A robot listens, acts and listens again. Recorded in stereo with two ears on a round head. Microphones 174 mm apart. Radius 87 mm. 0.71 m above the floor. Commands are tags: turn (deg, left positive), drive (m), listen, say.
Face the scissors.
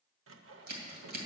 <turn deg="-50"/>
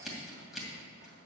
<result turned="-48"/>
<say>Found it: scissors, straight ahead.</say>